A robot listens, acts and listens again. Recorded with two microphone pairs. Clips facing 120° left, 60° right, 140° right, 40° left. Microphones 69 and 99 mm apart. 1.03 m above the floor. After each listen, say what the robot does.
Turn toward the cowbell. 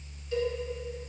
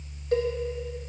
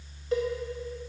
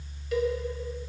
Turn 85° right.
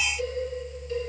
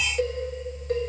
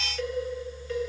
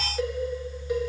Turn 30° right.
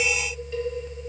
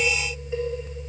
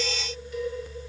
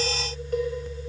Turn 10° left.
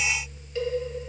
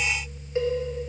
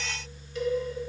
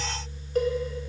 Facing the cowbell, 1 to 2 m away.